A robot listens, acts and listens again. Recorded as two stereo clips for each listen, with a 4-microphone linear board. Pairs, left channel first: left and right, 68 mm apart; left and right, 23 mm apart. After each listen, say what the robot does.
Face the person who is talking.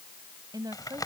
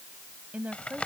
Turn 90° right.
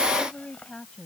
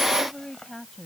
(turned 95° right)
Turn 10° left.
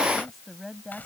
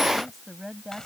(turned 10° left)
Found it: a woman speaking, straight ahead.